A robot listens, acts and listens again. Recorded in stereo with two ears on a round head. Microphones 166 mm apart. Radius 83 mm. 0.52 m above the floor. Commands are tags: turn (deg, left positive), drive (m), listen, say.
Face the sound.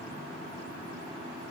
<listen/>
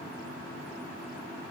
<listen/>
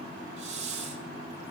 <turn deg="-35"/>
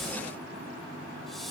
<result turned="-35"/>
<say>Facing the hiss, 1 to 2 m away.</say>